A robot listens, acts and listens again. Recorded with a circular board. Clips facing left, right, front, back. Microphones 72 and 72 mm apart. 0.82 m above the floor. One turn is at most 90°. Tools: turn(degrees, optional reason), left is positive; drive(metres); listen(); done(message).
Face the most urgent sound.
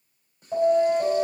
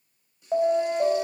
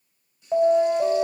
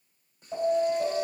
turn(degrees=-45, reason="The alarm: 45° right.")
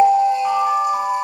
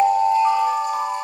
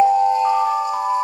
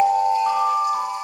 done("Facing the alarm, 2 to 4 m away.")